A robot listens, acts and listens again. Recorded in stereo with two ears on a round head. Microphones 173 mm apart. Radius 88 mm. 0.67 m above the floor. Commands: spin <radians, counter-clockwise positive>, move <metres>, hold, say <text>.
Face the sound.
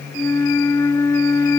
spin 0.26
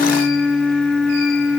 say Found it: a flute, straight ahead.